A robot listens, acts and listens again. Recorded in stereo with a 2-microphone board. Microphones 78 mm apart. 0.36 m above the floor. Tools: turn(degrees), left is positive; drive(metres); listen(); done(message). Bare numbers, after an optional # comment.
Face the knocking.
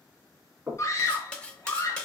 # The knocking: about 25° right or 155° right.
turn(-25)
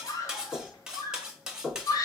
done("Found it: knocking, straight ahead.")